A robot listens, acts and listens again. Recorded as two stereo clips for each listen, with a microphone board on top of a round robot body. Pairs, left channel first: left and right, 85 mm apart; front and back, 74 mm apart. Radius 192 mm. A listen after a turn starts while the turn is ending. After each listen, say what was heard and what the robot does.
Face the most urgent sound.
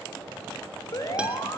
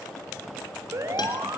The alarm: 135° left. Turn 135° left.
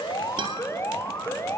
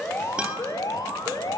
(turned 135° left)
The alarm is now 30° left. Turn 30° left.
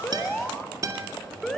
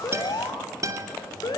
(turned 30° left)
Facing the alarm.